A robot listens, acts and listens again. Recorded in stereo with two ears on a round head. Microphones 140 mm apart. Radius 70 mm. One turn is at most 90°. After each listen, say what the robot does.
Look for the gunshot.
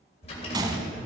Turn 25° right.
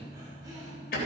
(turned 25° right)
Keep listening.
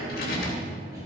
I heard a gunshot, but can't make it out now. It was about straight ahead or 130° right.